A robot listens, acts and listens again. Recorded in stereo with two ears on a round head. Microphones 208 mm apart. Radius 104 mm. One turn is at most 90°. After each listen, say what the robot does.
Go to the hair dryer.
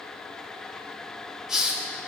Keep listening.
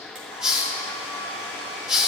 Turn 60° right.
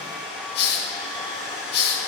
Drive 1.0 m forward.
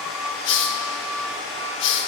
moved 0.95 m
Drive 1.0 m forward.
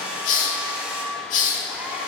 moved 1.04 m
Drive 1.0 m forward.
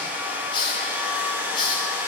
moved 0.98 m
Turn 10° right.
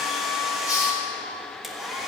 Drive 1.0 m forward.
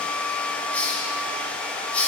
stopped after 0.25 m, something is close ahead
I am next to the hair dryer.